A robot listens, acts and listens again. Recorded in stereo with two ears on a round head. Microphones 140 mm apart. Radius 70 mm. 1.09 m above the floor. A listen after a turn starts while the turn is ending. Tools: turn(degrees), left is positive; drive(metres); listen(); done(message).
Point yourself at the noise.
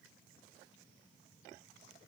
listen()
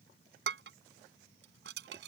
turn(degrees=-70)
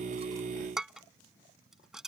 done("Facing the dishes clattering.")